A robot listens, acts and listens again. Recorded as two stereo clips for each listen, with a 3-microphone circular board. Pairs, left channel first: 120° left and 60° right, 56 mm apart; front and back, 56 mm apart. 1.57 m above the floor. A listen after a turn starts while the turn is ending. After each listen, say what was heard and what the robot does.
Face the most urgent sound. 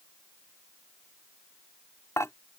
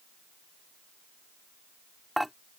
Keep listening.
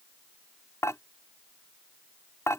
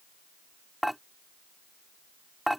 Keep listening.
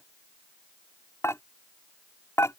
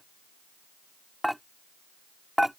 I can't make out anything urgent to turn to.